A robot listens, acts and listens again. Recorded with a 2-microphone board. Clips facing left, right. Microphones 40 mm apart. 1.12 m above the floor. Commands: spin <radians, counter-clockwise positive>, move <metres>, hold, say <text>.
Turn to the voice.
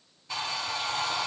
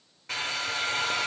hold
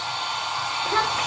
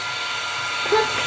spin -1.13
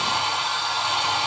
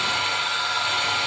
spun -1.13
hold
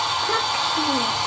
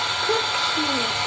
hold
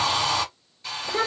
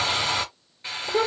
say Facing the child speaking, 2 to 4 m away.